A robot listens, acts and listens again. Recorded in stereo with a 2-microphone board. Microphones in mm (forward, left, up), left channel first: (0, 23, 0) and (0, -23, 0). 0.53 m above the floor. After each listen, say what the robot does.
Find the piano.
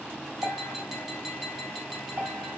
Turn 65° right.
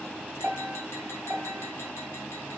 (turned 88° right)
Turn 20° right.
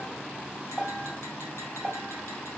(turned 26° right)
Facing the piano.